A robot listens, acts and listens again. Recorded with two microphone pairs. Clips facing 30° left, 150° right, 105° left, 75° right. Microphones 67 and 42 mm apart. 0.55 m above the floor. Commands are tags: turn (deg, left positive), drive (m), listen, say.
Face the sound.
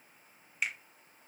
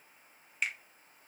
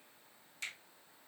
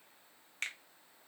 <turn deg="-55"/>
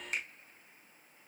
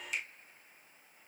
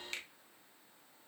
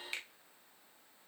<say>Facing the finger snap.</say>